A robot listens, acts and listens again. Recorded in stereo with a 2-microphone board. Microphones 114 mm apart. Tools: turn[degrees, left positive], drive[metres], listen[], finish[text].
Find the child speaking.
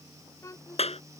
Thought: The child speaking: about 30° left or 150° left.
Action: turn[30]
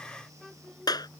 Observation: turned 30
Action: finish[Found it: a child speaking, straight ahead.]